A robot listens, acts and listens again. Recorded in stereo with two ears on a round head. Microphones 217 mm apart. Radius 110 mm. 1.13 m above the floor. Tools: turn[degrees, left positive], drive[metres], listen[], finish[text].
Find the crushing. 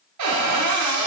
Action: listen[]
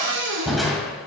Action: turn[30]
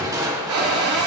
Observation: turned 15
Thought: So it is at 15° right.
Action: turn[-15]
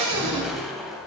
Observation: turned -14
Action: finish[Found it: crushing, straight ahead, 2 to 4 m away.]